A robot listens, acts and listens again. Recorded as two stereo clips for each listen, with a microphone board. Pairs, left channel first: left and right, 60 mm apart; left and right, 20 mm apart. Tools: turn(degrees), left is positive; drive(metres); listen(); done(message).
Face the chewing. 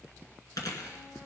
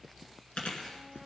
turn(degrees=90)
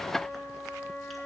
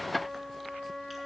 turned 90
listen()
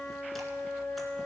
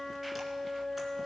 listen()
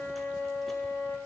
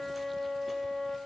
done("Facing where the chewing came from. I can't hear it now.")